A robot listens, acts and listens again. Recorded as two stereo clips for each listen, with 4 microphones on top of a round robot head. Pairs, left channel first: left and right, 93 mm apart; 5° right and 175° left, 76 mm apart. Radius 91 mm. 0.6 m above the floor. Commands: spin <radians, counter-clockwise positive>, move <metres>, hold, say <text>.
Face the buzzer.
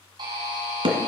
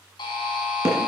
spin -0.70
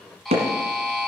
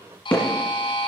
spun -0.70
say Facing the buzzer, 2 to 4 m away.